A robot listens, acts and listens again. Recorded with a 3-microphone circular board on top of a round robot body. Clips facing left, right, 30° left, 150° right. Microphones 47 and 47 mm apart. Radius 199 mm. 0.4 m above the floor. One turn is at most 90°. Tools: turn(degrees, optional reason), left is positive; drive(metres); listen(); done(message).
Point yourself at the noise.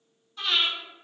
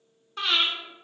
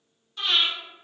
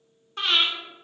turn(degrees=-90, reason="The breathing: 110° right.")
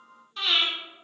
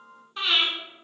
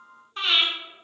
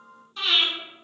turn(degrees=-20, reason="The breathing is now 20° right.")
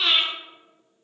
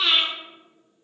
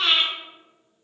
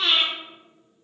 done("Found it: breathing, straight ahead.")